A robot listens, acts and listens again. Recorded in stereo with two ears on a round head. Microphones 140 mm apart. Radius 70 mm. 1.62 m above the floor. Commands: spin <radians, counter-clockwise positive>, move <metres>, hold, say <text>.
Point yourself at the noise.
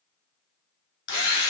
spin 1.57
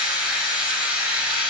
say Facing the drill, 2 to 4 m away.